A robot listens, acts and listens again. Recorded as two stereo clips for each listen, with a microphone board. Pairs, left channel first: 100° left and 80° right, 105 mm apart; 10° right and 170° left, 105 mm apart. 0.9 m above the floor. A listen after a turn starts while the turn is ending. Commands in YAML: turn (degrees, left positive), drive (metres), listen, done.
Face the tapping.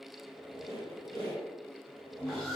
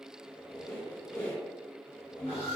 listen: true
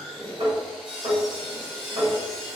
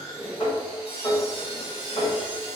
turn: -45
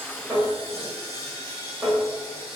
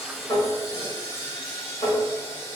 done: "Found it: tapping, straight ahead."